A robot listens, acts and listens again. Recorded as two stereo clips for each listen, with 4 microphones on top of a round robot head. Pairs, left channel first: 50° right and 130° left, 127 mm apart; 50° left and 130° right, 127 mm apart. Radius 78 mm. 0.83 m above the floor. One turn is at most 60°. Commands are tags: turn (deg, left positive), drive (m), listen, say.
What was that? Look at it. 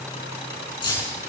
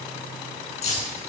<turn deg="10"/>
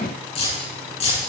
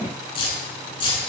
<say>Found it: keys jangling, straight ahead.</say>